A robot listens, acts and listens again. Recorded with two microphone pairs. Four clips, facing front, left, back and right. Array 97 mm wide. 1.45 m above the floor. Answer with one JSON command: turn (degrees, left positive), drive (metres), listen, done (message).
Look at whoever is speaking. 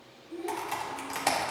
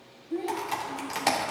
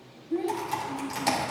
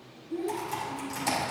{"turn": 150}
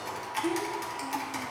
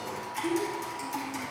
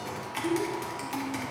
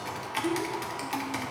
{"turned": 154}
{"done": "Found it: a child speaking, straight ahead, 2 to 4 m away."}